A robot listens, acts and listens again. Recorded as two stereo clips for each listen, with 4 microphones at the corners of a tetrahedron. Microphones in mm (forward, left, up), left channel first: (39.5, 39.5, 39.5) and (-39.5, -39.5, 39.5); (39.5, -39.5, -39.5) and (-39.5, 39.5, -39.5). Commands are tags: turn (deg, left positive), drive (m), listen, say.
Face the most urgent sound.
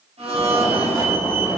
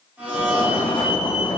<turn deg="-80"/>
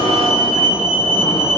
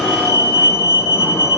<turn deg="20"/>
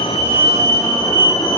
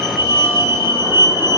<say>Facing the fire alarm.</say>